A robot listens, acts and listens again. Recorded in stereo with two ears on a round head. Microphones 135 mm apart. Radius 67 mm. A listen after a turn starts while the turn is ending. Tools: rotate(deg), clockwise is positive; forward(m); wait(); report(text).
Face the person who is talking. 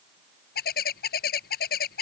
wait()
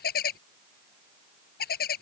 wait()
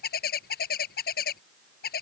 report("I can't make out anyone speaking, only a bird.")